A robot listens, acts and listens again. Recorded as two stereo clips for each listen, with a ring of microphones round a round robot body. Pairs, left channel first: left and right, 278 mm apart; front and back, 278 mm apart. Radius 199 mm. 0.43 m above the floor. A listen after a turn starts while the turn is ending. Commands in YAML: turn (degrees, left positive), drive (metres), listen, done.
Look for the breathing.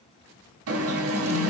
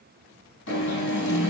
listen: true
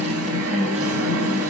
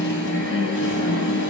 listen: true
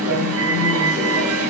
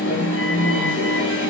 done: "I can't make out breathing, only an alarm."